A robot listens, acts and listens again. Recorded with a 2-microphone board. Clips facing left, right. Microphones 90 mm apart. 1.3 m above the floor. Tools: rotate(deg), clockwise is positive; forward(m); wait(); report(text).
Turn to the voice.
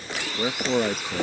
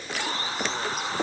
rotate(-90)
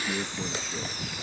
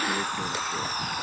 wait()
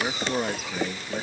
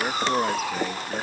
report("Found it: a man speaking, straight ahead.")